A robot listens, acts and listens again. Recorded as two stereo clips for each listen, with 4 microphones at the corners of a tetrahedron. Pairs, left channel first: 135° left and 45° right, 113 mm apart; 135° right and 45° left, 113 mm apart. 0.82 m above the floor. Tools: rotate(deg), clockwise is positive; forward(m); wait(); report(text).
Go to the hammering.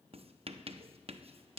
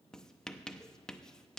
wait()
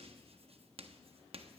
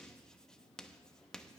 wait()
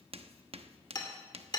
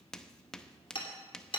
rotate(175)
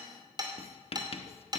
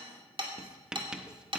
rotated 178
forward(1.0)
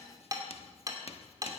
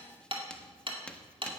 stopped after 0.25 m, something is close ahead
rotate(-10)
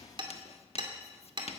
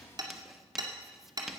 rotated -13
report("Blocked. The hammering is further on, straight ahead.")